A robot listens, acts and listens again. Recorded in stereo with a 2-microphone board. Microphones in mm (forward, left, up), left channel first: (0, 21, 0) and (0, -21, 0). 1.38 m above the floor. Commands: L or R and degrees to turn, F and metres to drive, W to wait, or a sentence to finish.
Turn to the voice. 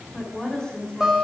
L15
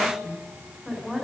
Found it: a woman speaking, straight ahead.